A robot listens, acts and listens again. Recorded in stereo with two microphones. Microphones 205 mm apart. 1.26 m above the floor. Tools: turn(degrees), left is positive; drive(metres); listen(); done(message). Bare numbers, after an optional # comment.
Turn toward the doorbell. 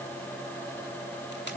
listen()
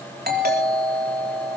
# The doorbell: about 50° right or 130° right.
turn(-50)
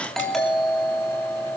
done("Found it: a doorbell, straight ahead.")